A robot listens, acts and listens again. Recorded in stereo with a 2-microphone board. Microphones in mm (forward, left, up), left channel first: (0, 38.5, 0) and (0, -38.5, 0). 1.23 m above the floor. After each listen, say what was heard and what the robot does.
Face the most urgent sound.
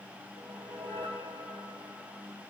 Keep listening.
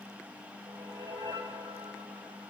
Keep listening.
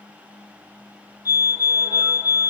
The fire alarm: about 45° left or 135° left. Turn 45° left.
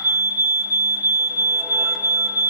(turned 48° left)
So it is at 75° left. Turn 75° left.
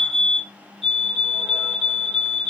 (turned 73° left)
Found it: a fire alarm, straight ahead.